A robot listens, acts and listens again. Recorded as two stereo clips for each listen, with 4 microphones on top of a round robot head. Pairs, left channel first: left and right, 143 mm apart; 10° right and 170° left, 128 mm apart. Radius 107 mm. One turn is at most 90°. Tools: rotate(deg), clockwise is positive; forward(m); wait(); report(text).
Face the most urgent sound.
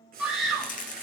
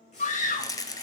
report("Found it: a scream, straight ahead, 2 to 4 m away.")